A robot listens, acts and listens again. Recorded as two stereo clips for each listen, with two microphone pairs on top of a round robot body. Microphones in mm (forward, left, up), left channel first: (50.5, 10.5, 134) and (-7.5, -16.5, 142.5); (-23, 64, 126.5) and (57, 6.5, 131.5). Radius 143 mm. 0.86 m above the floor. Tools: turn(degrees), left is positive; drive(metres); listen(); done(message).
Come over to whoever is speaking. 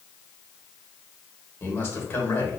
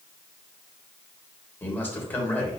turn(degrees=75)
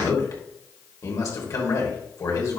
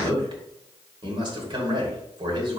drive(metres=1.0)
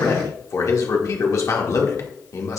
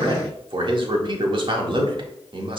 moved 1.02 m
drive(metres=1.0)
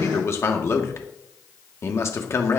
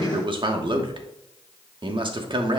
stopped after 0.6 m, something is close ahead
turn(degrees=-10)
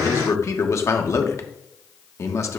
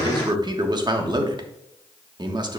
done("Arrived at the man speaking, straight ahead.")